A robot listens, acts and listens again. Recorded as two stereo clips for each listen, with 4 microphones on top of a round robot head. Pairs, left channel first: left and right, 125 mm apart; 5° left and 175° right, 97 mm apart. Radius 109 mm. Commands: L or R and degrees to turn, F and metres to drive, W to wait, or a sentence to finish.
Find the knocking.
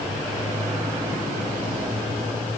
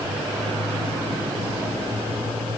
W
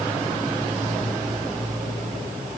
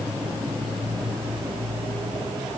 W
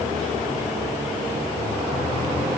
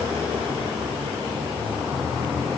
I can't make out knocking to turn to.